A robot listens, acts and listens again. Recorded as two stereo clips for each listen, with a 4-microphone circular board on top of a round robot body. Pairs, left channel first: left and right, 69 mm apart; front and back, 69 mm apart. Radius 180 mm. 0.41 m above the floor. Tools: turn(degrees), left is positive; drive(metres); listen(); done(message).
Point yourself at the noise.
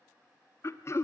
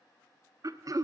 turn(degrees=140)
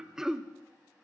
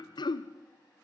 done("Found it: throat clearing, straight ahead.")